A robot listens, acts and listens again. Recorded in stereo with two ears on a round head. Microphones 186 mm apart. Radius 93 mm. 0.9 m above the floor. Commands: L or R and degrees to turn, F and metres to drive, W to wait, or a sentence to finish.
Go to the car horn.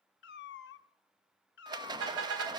R90
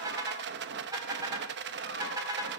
R20
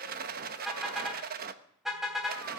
F1.0
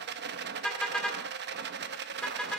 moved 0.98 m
F1.0
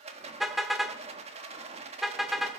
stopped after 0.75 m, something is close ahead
I am next to the car horn.